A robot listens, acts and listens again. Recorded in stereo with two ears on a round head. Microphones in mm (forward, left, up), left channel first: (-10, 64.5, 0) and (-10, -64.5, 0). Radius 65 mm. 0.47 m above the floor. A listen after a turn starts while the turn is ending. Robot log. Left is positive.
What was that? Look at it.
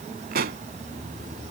note: The pop: about 70° right or 110° right.
cmd yaw -70
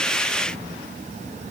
cmd idle
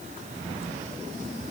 end: I heard a pop, but can't make it out now. It was about straight ahead or 40° right.